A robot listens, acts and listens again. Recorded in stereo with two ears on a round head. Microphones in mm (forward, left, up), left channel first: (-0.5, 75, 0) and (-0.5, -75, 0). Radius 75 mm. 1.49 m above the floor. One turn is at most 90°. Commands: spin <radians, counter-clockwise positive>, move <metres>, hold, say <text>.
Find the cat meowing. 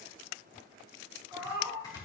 spin -0.52
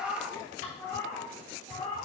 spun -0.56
spin 0.52
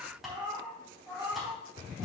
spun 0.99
spin -0.17
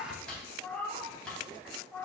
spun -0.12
spin 0.17
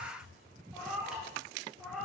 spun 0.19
say Found it: a cat meowing, straight ahead.